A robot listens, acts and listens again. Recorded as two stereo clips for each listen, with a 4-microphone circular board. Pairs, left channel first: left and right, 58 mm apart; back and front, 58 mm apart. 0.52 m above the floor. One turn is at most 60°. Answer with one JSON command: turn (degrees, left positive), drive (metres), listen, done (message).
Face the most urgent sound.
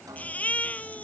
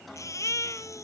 {"turn": 60}
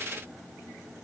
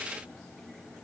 {"turn": 60}
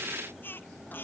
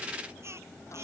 {"turn": 35}
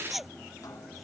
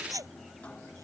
{"done": "Facing the baby crying."}